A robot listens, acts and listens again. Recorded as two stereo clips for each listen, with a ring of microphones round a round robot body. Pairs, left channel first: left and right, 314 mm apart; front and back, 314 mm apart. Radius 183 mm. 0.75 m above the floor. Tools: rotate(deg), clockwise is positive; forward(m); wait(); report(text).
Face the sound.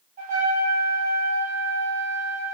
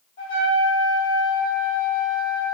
rotate(25)
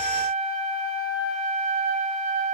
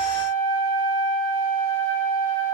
rotate(-15)
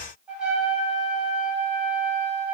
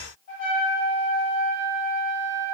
report("Found it: a trumpet, straight ahead, 1 to 2 m away.")